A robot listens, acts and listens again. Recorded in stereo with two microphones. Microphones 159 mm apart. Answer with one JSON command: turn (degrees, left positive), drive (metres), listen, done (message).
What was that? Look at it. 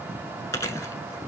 {"turn": 20}
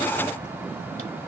{"listen": true}
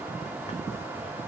{"listen": true}
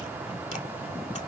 {"done": "I heard chewing, but can't make it out now. It was about straight ahead or 140° left."}